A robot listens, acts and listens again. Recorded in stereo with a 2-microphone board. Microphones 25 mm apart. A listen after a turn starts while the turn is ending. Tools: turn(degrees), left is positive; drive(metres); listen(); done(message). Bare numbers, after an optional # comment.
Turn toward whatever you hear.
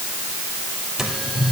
turn(-30)
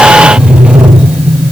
# So it is at 135° right.
turn(-135)
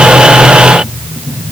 # The sliding door is now 10° right.
turn(-10)
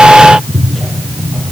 done("Facing the sliding door, 2 to 4 m away.")